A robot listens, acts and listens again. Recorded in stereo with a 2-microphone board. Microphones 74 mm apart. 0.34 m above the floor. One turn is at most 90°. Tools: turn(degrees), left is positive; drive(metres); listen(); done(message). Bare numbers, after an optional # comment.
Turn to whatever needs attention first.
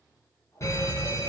# The fire alarm: about 40° left or 140° left.
turn(40)
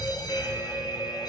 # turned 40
# So it is at 95° left.
turn(90)
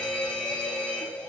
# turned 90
# The fire alarm is now 15° left.
turn(15)
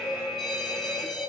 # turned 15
done("Facing the fire alarm, over 4 m away.")